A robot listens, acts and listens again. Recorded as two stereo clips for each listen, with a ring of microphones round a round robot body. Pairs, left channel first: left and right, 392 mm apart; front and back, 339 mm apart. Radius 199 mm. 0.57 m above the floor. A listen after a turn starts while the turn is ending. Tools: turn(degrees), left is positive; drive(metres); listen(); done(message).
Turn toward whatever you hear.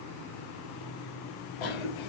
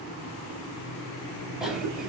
turn(degrees=90)
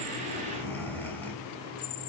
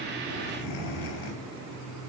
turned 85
done("Facing the cough, over 4 m away.")